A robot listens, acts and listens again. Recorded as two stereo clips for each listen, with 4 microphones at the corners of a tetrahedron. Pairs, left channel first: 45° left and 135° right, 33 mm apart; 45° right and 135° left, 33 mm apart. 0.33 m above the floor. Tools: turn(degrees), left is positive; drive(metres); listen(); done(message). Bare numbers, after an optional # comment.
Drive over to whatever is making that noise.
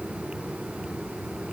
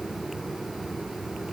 listen()
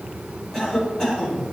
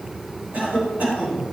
# The cough: 110° left.
turn(110)
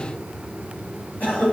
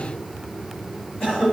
drive(1.0)
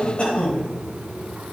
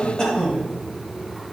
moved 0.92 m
# The cough is now 20° left.
turn(20)
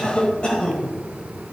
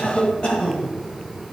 drive(1.0)
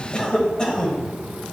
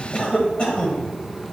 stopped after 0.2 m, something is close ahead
done("Arrived at the cough, straight ahead.")